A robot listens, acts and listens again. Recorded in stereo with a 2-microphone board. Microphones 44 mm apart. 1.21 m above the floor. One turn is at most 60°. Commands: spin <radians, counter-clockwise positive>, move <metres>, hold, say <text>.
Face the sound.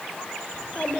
spin 0.61
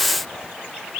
hold
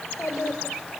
spin 1.05
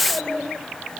spin 0.52
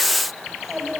spin -0.17
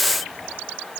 hold
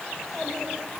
say Found it: a child speaking, straight ahead.